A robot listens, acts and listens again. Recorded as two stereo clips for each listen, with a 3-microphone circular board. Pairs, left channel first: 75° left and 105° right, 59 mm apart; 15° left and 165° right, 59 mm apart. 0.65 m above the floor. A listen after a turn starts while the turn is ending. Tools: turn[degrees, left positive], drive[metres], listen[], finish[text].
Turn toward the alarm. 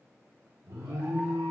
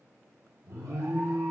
Thought: The alarm: 130° right.
Action: turn[-130]
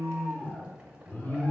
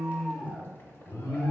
Thought: The alarm is now 10° left.
Action: turn[10]
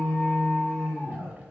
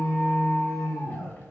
Action: finish[Facing the alarm, 1 to 2 m away.]